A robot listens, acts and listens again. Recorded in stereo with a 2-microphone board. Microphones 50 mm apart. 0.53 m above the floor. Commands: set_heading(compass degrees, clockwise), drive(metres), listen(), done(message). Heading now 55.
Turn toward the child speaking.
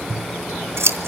listen()
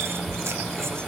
listen()
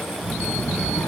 set_heading(340)
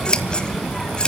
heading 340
done("Found it: a child speaking, straight ahead.")